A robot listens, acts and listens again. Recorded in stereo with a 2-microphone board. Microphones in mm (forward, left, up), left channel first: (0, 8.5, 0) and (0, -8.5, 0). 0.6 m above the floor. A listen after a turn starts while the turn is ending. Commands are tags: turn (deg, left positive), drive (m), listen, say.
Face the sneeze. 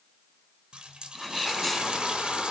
<turn deg="30"/>
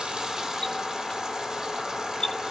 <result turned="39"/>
<listen/>
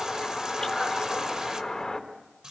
<say>I heard a sneeze, but can't make it out now. It was about 35° right or 140° left.</say>